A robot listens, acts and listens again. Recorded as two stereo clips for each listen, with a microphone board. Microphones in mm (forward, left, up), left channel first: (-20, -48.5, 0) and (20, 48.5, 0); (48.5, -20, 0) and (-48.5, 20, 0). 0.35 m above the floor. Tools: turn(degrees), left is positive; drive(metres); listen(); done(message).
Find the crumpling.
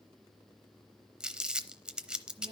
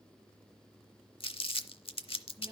turn(degrees=-10)
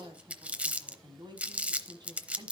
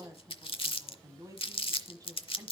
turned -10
done("Facing the crumpling.")